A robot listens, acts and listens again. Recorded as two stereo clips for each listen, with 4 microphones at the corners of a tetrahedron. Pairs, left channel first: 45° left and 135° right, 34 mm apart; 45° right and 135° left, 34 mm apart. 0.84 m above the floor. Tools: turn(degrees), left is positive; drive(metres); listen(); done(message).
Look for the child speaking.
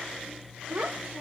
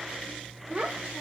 turn(degrees=-170)
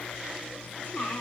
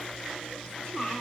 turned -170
turn(degrees=25)
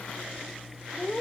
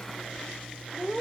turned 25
turn(degrees=15)
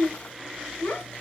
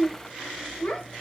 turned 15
done("Facing the child speaking, 2 to 4 m away.")